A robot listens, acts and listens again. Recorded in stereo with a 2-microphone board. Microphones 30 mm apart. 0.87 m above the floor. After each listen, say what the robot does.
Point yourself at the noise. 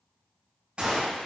Turn 35° right.
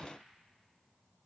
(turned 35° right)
Keep listening.
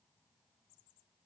I heard a gunshot, but can't make it out now. It was about straight ahead or 110° right.